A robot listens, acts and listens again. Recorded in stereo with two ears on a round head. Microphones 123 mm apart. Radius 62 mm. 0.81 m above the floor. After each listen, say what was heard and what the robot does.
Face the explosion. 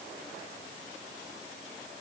Keep listening.
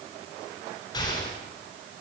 The explosion: about 30° left or 150° left. Turn 30° left.
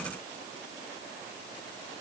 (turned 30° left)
Keep listening.
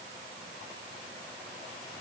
I heard an explosion, but can't make it out now. It was about straight ahead or 120° left.